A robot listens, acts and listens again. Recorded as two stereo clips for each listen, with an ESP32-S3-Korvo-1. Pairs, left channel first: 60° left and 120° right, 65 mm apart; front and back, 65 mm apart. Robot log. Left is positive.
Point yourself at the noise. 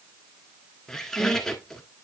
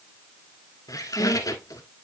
note: The squeak: 20° right.
cmd yaw -20
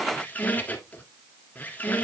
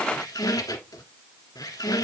end: Found it: a squeak, straight ahead.